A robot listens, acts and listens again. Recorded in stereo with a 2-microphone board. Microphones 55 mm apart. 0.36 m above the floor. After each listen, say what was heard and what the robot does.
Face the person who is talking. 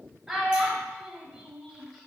Turn 30° right.
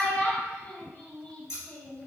So it is at 25° left. Turn 25° left.
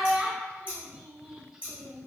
The child speaking is now 15° right. Turn 15° right.
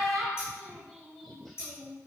Found it: a child speaking, straight ahead, under 1 m away.